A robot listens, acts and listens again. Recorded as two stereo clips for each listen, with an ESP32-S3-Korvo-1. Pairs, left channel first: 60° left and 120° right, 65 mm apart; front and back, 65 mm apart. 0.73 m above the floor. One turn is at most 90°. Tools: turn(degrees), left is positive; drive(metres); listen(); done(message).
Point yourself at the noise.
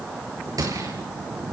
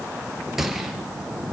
turn(degrees=-90)
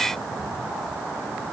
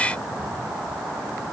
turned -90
turn(degrees=-10)
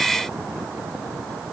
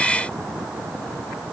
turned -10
done("I heard a gunshot from this way, but can't make it out now.")